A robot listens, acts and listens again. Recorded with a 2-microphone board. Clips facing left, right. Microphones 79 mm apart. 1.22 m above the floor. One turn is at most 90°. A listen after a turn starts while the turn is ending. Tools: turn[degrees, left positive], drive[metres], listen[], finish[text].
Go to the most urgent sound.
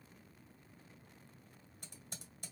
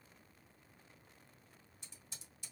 Action: listen[]
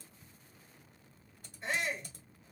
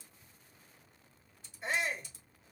Action: turn[-30]
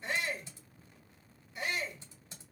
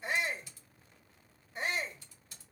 Thought: So it is at 145° right.
Action: turn[-90]
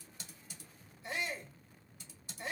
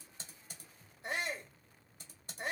Thought: The shout is now 65° right.
Action: turn[-65]
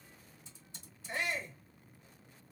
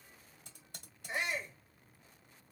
Thought: The shout is now 15° right.
Action: turn[-15]
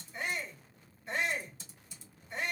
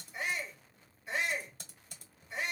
Action: drive[1.0]
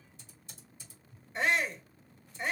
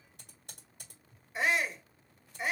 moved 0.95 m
Action: drive[1.0]
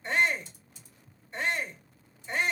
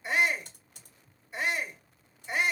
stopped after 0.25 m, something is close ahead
Action: finish[Arrived at the shout, straight ahead.]